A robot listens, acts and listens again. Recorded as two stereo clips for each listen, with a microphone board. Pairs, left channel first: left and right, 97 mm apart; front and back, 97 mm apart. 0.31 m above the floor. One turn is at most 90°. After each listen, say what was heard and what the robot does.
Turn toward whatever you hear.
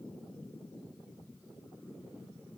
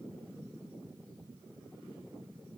Keep listening.
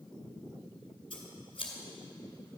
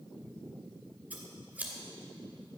The scissors: 110° left. Turn 90° left.
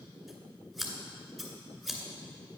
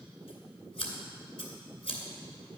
Found it: scissors, straight ahead.